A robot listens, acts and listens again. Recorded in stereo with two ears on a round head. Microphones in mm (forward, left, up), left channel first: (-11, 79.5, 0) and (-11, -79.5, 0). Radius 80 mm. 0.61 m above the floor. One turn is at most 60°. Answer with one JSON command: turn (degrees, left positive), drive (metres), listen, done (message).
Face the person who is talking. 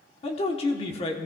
{"turn": 35}
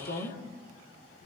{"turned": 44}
{"turn": 60}
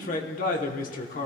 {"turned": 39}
{"turn": 60}
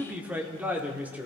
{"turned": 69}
{"turn": -10}
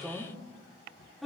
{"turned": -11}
{"done": "Found it: a man speaking, straight ahead, 1 to 2 m away."}